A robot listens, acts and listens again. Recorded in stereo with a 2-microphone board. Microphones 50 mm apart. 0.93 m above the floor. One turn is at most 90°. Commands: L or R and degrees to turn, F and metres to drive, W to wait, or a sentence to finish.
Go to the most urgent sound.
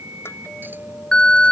L15
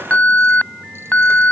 L90
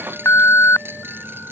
L70
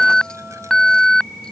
L10
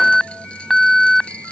F1.0
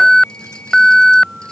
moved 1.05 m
F1.0
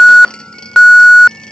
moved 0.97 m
L10
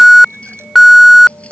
F1.0
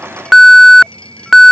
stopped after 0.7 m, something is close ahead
Arrived at the alarm, straight ahead.